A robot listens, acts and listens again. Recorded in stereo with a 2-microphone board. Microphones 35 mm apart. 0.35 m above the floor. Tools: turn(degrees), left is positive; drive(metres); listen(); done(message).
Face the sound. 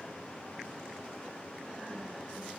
listen()
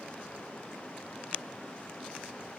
listen()
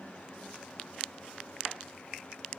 done("I can't make out anything to turn to.")